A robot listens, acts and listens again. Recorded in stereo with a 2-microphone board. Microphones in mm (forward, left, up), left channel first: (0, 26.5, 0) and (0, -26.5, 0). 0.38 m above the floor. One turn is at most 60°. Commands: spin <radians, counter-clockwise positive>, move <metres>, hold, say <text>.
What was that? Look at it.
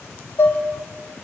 spin 0.96
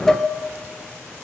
say Found it: dishes clattering, straight ahead, 1 to 2 m away.